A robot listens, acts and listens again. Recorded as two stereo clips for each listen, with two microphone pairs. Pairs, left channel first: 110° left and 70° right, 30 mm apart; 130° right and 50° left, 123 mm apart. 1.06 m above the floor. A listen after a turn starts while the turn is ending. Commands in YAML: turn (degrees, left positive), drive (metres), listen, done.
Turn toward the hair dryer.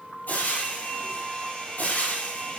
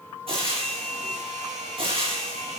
turn: 55
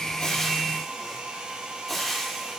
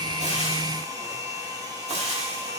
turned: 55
turn: -10
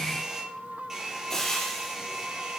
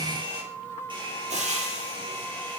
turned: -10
done: "Facing the hair dryer."